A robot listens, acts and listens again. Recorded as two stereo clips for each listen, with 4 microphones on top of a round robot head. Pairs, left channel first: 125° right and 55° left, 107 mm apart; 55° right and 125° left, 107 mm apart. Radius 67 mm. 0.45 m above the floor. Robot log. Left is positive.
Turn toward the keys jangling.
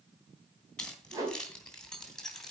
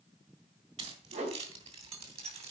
note: The keys jangling: 150° left.
cmd yaw +150
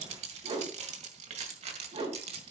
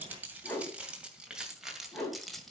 note: The keys jangling is now 30° left.
cmd yaw +30
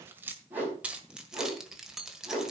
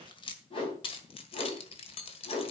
note: The keys jangling is now 30° right.
cmd yaw -30
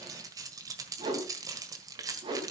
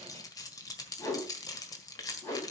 end: Facing the keys jangling, 1 to 2 m away.